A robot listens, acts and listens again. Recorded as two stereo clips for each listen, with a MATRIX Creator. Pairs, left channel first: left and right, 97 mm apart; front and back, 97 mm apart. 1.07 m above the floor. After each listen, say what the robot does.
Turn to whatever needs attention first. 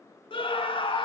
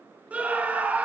Turn 105° left.
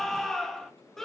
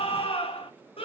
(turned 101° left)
Facing the scream.